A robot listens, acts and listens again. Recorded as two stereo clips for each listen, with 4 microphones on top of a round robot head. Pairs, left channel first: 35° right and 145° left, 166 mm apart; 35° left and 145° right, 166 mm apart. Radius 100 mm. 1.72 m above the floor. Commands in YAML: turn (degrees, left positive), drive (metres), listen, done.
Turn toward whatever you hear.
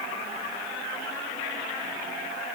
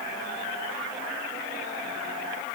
listen: true
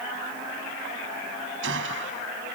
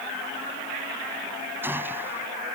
turn: 140
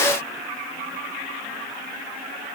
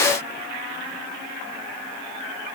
done: "I heard a gunshot from this way, but can't make it out now."